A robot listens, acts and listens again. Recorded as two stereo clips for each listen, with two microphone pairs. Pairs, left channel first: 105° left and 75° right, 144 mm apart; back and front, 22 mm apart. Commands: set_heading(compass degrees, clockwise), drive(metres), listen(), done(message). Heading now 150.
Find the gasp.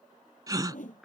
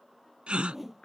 set_heading(165)
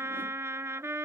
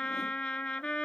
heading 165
done("Facing where the gasp came from. I can't hear it now.")